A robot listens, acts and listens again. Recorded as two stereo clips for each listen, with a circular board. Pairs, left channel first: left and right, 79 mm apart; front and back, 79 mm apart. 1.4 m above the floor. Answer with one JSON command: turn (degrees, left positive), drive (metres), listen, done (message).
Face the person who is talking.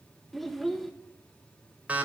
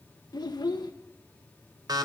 {"done": "Found it: a child speaking, straight ahead."}